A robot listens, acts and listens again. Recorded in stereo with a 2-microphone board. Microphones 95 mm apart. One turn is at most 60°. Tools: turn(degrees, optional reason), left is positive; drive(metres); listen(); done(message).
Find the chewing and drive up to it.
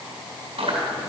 turn(degrees=-60, reason="The chewing: about 70° right or 110° right.")
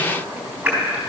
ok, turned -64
turn(degrees=-10, reason="So it is at 10° right.")
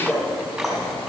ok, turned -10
drive(metres=1.0)
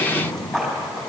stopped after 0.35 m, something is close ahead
done("Something is in my way. I am facing the chewing but have not reached it.")